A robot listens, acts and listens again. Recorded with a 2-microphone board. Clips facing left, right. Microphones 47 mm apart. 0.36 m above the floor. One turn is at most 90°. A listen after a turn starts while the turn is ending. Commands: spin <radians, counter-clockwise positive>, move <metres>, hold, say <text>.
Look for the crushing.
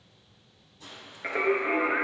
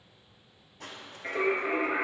spin -1.05
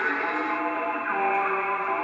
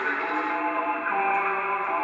hold
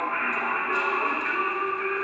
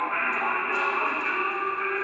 hold
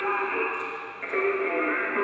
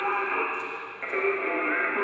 say I heard crushing, but can't make it out now. It was about straight ahead or 60° right.